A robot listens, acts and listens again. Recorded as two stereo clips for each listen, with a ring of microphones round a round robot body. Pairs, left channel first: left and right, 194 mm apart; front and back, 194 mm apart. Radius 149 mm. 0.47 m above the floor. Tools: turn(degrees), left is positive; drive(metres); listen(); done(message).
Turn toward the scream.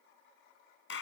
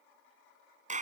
listen()
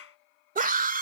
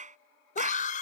turn(degrees=-50)
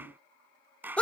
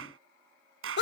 done("Found it: a scream, straight ahead.")